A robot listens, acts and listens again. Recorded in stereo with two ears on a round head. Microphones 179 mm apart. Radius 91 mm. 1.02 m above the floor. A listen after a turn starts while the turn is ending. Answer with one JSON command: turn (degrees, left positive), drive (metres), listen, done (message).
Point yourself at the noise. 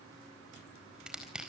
{"turn": -30}
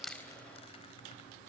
{"listen": true}
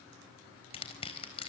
{"turn": 30}
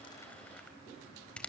{"done": "Found it: crushing, straight ahead."}